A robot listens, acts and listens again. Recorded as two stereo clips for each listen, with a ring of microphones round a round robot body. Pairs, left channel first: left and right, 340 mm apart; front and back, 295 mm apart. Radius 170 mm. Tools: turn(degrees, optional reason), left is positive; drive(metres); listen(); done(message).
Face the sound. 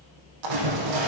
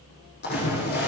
turn(degrees=-65, reason="The splash: 65° right.")
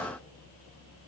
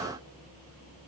done("Facing where the splash came from. I can't hear it now.")